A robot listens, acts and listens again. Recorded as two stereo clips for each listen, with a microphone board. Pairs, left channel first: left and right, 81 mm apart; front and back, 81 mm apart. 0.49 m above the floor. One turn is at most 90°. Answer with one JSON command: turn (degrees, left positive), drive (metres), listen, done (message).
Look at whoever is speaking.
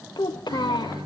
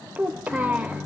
{"turn": 90}
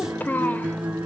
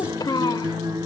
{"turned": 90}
{"turn": 25}
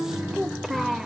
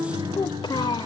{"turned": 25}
{"done": "Facing the child speaking, under 1 m away."}